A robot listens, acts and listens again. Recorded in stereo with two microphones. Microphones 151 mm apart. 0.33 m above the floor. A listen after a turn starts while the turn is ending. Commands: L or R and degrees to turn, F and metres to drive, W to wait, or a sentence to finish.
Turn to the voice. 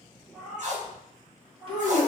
R40
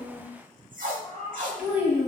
R10
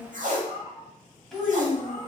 Found it: a child speaking, straight ahead, 1 to 2 m away.